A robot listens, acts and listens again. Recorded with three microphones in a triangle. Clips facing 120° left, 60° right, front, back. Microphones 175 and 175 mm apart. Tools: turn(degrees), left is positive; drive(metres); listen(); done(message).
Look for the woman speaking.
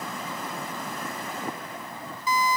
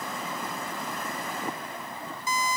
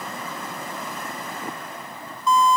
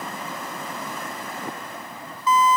listen()
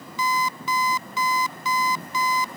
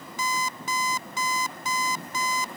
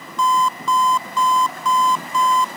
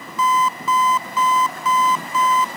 listen()
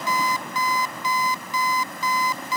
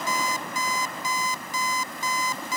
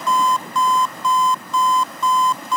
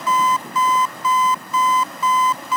done("I can't make out a woman speaking to turn to.")